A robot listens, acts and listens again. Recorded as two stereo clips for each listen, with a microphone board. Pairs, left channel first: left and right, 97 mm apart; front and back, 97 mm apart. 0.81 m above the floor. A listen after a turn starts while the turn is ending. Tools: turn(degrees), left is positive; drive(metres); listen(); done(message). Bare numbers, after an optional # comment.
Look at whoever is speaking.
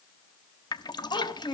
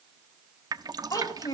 # The child speaking: 55° left.
turn(55)
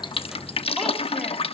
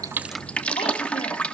listen()
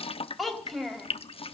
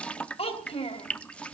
done("Facing the child speaking, 2 to 4 m away.")